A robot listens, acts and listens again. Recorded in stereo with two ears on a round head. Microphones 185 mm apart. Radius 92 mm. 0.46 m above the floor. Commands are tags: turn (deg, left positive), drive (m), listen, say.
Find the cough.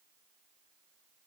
<listen/>
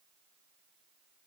<listen/>
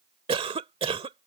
<turn deg="-30"/>
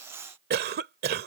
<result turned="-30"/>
<turn deg="-120"/>
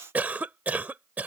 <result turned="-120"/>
<turn deg="-10"/>
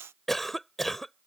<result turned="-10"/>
<say>Found it: a cough, straight ahead.</say>